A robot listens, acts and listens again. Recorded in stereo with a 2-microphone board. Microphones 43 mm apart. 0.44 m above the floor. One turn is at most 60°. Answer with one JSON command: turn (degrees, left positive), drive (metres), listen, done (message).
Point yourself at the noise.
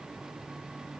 {"listen": true}
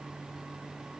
{"listen": true}
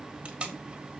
{"turn": -25}
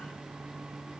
{"listen": true}
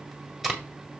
{"done": "Found it: tape being pulled, straight ahead, 1 to 2 m away."}